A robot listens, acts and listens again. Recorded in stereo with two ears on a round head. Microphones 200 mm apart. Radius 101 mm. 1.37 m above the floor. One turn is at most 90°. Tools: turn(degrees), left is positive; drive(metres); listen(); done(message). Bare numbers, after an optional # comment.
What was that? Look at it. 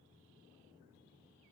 listen()
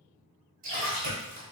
# The splash: about 40° right or 140° right.
turn(-40)
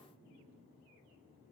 listen()
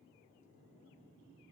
done("I heard a splash, but can't make it out now. It was about straight ahead or 100° right.")